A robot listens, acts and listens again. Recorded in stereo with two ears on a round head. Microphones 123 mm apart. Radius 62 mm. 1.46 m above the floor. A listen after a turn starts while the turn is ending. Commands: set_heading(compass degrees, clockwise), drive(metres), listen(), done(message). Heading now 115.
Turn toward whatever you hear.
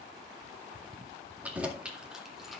set_heading(85)
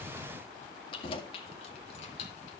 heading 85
set_heading(315)
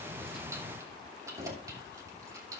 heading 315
set_heading(340)
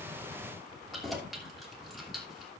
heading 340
done("Facing the keys jangling, 2 to 4 m away.")